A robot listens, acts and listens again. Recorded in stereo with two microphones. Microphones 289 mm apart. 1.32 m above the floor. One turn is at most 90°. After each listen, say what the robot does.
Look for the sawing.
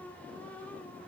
Keep listening.
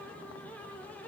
Keep listening.
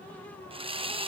Turn 20° right.
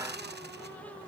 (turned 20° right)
Turn 90° right.
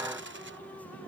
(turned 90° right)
Turn 50° right.
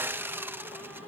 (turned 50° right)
Turn 10° right.
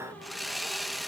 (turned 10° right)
Found it: sawing, straight ahead.